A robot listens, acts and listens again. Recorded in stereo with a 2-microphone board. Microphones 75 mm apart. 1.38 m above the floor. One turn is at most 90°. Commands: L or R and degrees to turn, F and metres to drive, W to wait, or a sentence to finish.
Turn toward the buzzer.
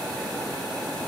W
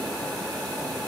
W
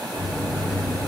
L65
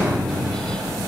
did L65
L20
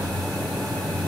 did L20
Found it: a buzzer, straight ahead, 1 to 2 m away.